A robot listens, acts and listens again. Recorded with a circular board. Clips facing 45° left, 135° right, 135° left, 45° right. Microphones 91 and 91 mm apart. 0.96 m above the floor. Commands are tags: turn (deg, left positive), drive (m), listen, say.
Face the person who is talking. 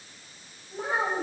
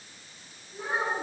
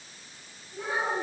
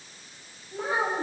<turn deg="15"/>
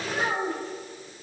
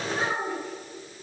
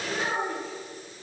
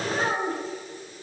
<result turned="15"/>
<say>Facing the child speaking, 2 to 4 m away.</say>